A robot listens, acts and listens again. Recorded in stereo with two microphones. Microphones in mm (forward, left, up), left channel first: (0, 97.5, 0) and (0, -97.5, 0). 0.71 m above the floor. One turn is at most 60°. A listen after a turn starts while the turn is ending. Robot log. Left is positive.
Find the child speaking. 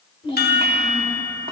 note: The child speaking: about 25° left or 155° left.
cmd yaw +25
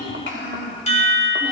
note: So it is at 105° left.
cmd yaw +60
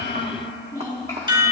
note: The child speaking is now 15° left.
cmd yaw +15
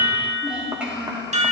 note: The child speaking is now 10° right.
cmd yaw -10
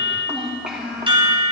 end: Found it: a child speaking, straight ahead, 2 to 4 m away.